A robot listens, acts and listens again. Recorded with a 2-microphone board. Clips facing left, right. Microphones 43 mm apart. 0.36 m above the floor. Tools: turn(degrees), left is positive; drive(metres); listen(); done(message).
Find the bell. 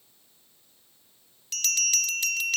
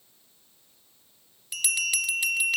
turn(degrees=-15)
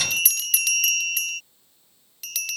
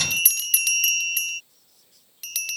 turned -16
done("Facing the bell.")